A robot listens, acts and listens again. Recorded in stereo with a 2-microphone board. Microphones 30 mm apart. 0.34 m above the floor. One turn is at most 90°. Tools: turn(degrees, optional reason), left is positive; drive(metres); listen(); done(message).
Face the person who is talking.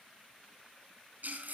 listen()
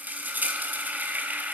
listen()
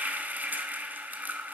done("I can't make out anyone speaking, only frying.")